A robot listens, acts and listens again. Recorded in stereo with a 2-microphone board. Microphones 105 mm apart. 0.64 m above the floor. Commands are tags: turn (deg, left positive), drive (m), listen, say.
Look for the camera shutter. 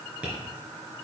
<listen/>
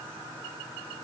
<listen/>
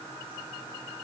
<say>I can't make out a camera shutter, only tapping.</say>